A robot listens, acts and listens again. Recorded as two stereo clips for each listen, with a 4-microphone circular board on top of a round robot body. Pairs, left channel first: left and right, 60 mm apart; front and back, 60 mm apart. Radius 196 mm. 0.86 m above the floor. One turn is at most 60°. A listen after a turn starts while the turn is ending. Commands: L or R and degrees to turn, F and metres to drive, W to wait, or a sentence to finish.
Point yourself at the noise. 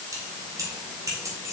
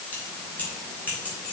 R60
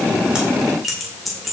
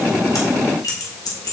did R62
Found it: keys jangling, straight ahead.